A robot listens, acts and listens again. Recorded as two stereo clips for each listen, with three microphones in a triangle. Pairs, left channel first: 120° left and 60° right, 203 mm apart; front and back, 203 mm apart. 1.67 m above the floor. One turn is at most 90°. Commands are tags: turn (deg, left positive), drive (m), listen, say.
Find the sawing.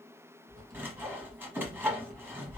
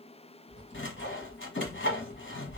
<turn deg="20"/>
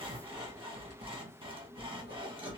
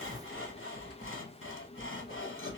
<say>Facing the sawing, under 1 m away.</say>